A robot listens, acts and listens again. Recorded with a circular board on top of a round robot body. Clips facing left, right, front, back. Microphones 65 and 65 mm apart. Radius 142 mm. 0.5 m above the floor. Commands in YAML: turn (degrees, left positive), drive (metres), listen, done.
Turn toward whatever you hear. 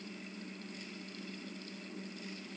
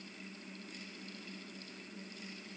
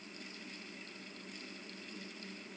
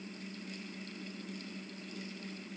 listen: true
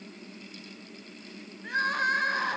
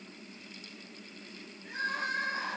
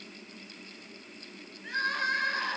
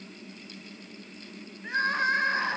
turn: 115
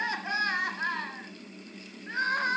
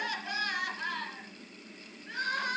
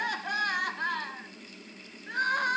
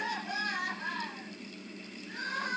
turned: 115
turn: 30
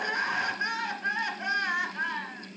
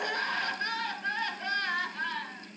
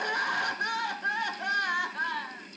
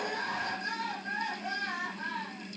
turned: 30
turn: 20
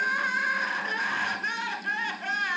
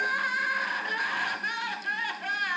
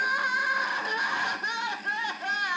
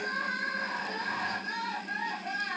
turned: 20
done: "Facing the crying."